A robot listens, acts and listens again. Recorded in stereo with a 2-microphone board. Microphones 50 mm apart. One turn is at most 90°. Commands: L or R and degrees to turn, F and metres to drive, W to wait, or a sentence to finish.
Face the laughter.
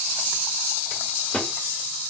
W
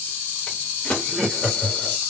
L30
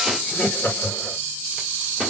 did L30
L90
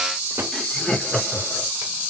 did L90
L20
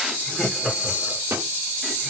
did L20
Found it: laughter, straight ahead, 1 to 2 m away.